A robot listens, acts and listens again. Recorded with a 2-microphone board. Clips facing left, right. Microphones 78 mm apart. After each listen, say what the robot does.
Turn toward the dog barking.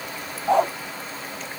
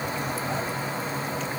Turn 70° left.
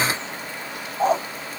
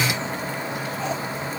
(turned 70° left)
Turn 40° left.
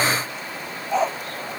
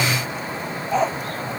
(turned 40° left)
Facing the dog barking.